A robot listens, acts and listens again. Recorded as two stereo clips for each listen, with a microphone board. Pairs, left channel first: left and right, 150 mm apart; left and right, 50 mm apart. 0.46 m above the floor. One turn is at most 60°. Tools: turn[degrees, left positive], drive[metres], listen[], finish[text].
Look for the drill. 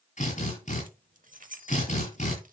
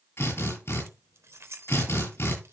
Thought: The drill: about 60° left or 120° left.
Action: turn[60]
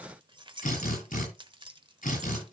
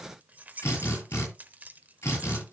Thought: So it is at 65° left.
Action: turn[60]
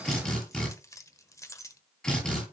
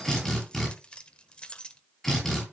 Action: finish[Facing the drill.]